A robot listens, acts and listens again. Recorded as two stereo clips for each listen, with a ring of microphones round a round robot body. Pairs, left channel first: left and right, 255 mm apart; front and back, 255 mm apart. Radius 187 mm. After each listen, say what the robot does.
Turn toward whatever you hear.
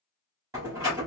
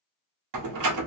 Turn 170° right.
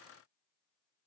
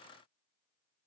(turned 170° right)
I heard a door slam from this way, but can't make it out now.